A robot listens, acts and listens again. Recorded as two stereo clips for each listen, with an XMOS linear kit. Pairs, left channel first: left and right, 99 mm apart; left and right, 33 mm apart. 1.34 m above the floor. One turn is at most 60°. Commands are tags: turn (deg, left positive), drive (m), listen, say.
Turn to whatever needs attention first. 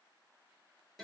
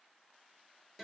<listen/>
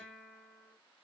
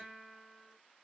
<listen/>
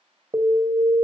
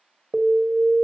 <turn deg="-50"/>
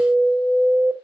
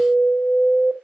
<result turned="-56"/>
<say>Facing the alarm.</say>